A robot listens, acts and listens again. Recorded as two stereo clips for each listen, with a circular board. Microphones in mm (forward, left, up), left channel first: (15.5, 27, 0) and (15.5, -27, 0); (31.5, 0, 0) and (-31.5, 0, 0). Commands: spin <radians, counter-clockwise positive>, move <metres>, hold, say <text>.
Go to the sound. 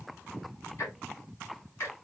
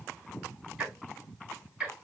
spin 1.92
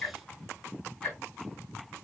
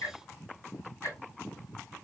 spin 0.44
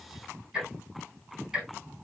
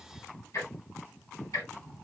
spin -0.17
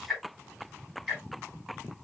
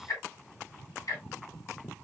move 1.0
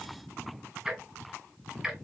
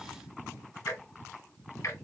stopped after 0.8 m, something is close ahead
say I am next to the ticking.